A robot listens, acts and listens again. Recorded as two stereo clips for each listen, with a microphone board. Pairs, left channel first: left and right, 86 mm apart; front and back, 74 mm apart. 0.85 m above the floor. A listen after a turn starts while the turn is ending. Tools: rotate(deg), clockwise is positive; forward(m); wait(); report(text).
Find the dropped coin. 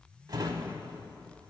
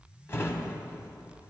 wait()
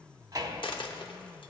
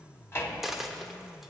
rotate(-95)
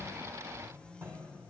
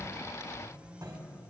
report("I heard a dropped coin from this way, but can't make it out now.")